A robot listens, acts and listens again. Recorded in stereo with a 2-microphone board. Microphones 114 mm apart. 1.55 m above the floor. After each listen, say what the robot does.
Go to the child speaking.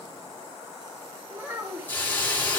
Turn 20° right.
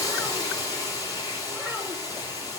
Keep listening.
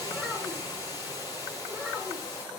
Drive 1.0 m forward.
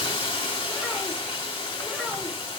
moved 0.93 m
Keep listening.
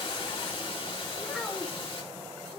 Drive 1.0 m forward.
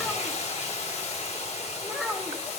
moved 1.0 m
Drive 1.0 m forward.
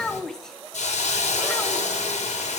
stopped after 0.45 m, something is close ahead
I am next to the child speaking.